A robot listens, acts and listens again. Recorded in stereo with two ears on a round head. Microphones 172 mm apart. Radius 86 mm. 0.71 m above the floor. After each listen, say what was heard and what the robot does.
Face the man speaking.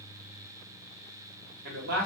The man speaking: about 60° right or 120° right. Turn 60° right.
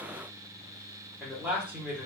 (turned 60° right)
So it is at 10° right. Turn 10° right.
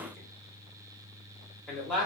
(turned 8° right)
Found it: a man speaking, straight ahead, 1 to 2 m away.